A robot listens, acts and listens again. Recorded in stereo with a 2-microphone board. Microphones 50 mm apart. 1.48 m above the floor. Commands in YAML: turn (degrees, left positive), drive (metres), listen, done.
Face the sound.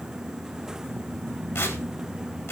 turn: 60
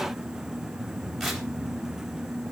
listen: true
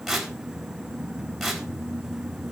done: "Found it: tearing paper, straight ahead."